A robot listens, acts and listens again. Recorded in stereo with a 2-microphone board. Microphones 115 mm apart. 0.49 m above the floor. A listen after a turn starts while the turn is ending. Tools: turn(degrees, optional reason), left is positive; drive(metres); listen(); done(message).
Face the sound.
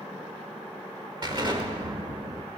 turn(degrees=-40, reason="The explosion: about 40° right or 140° right.")
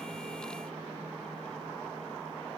listen()
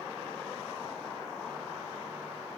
done("I heard an explosion, but can't make it out now. It was about straight ahead or 100° right.")